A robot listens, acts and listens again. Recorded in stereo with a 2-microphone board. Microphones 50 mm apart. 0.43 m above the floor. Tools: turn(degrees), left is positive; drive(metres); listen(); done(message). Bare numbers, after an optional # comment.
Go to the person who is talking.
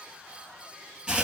listen()
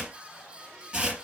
listen()
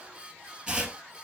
done("I can't make out anyone speaking to turn to.")